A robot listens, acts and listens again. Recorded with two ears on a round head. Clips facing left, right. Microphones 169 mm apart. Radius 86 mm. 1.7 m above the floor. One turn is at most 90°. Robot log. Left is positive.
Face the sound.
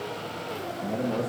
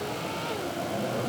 note: The man speaking: about 55° left or 125° left.
cmd yaw +55
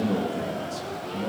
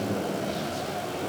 note: So it is at 75° left.
cmd yaw +75
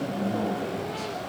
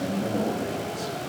note: The man speaking is now 15° right.
cmd yaw -15
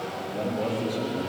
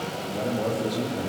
end: Found it: a man speaking, straight ahead.